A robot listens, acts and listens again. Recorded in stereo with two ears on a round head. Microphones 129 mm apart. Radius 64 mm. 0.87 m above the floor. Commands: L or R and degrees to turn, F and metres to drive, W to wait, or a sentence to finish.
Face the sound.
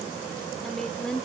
L30
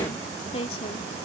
L135
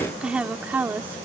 R15
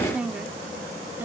R15
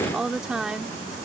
Facing the woman speaking.